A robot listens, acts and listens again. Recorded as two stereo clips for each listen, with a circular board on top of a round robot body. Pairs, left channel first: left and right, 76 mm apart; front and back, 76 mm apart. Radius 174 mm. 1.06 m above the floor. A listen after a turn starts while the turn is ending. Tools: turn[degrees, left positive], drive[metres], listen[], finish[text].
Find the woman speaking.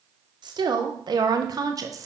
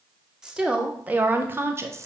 Thought: The woman speaking: 130° right.
Action: turn[-130]
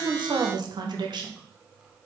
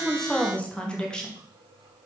Thought: The woman speaking is now 80° right.
Action: turn[-80]
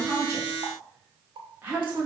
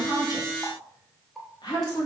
Thought: The woman speaking is now 25° right.
Action: turn[-25]
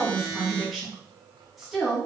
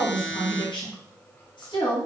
Action: finish[Facing the woman speaking.]